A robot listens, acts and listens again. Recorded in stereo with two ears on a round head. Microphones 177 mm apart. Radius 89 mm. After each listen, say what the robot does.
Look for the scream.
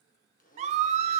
Turn 35° right.
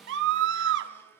Turn 110° right.
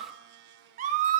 Turn 40° right.
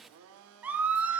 Turn 10° right.
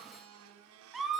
Found it: a scream, straight ahead.